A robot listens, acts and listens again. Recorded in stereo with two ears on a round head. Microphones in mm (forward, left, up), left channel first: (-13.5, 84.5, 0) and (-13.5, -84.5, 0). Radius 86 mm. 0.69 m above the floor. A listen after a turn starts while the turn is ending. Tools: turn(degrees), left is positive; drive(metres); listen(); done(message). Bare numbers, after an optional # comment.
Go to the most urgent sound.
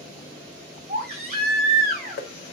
# The baby crying: about 35° right or 145° right.
turn(-35)
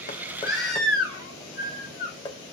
drive(1.0)
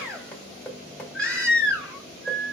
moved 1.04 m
drive(1.0)
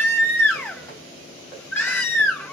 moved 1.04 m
# The baby crying is now 10° left.
turn(10)
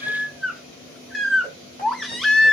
drive(1.0)
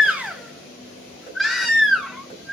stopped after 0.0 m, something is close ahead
done("Arrived at the baby crying, straight ahead.")